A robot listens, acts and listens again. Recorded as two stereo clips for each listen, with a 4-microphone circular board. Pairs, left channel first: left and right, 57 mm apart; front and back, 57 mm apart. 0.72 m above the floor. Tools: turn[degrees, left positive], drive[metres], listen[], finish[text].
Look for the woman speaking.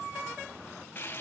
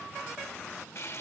Action: listen[]
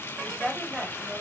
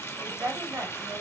Thought: The woman speaking: 165° right.
Action: turn[-165]
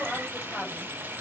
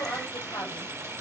Thought: The woman speaking is now 15° left.
Action: turn[15]
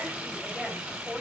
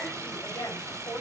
Action: finish[Found it: a woman speaking, straight ahead, over 4 m away.]